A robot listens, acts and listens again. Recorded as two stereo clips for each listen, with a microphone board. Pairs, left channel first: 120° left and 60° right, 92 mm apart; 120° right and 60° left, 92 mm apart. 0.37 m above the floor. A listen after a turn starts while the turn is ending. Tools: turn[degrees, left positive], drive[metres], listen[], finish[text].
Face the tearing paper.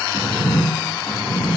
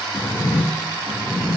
Action: listen[]
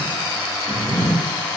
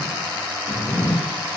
Action: listen[]
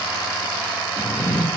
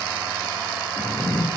Action: finish[I can't make out tearing paper to turn to.]